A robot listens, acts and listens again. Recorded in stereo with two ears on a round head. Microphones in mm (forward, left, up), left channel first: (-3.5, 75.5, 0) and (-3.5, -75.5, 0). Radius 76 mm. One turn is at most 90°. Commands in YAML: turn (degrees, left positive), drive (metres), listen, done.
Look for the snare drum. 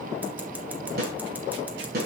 turn: -60
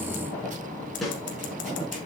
done: "Found it: a snare drum, straight ahead, over 4 m away."